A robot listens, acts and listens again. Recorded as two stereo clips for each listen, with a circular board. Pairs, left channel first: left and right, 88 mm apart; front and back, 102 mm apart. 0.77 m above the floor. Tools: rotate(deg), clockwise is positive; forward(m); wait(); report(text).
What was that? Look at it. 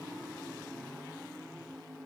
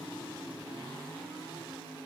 wait()
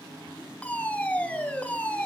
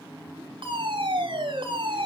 rotate(-160)
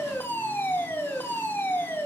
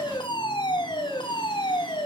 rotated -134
rotate(-25)
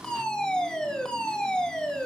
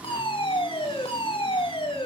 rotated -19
rotate(-10)
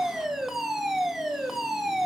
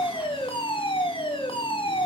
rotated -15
report("Found it: a fire alarm, straight ahead.")